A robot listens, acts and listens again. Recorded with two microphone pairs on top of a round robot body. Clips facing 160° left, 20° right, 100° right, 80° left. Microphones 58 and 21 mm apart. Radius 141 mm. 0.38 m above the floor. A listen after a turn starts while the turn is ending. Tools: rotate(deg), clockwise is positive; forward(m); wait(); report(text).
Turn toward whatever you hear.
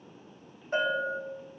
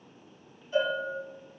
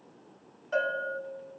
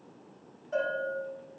rotate(155)
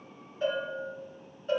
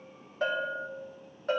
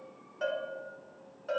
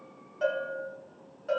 rotate(15)
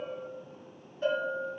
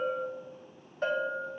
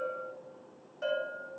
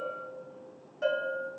report("Facing the bell, 2 to 4 m away.")